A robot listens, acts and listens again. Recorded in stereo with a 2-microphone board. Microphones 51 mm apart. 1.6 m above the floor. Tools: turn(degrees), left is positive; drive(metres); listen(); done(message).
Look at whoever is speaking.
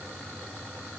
listen()
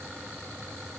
listen()
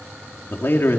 turn(degrees=45)
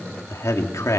turn(degrees=90)
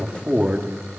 turn(degrees=-25)
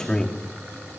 turn(degrees=10)
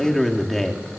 done("Facing the man speaking, 2 to 4 m away.")